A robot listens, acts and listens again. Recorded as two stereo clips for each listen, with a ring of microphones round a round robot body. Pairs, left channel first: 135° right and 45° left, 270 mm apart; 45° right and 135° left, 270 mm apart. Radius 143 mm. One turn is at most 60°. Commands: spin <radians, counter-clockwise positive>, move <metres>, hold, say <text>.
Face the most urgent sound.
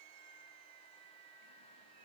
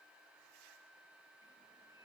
hold
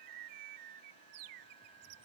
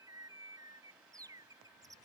hold
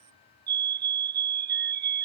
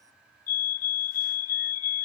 spin -0.17
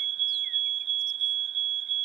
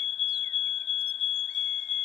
say Facing the fire alarm.